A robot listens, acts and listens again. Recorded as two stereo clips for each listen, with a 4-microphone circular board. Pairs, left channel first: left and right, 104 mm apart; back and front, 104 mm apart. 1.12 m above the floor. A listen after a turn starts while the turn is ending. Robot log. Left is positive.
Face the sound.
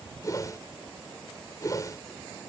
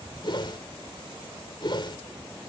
note: The whoosh: 145° left.
cmd yaw +145
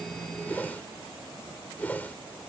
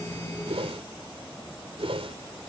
note: The whoosh is now 15° left.
cmd yaw +15
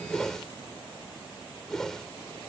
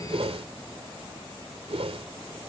end: Found it: a whoosh, straight ahead.